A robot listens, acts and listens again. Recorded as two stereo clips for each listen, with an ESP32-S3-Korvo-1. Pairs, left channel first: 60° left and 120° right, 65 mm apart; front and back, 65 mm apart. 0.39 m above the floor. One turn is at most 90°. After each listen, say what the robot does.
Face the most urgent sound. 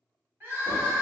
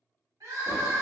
Turn 90° left.
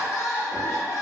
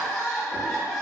Turn 80° left.
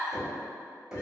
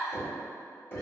Turn 10° left.
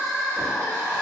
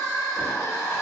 Facing the crying.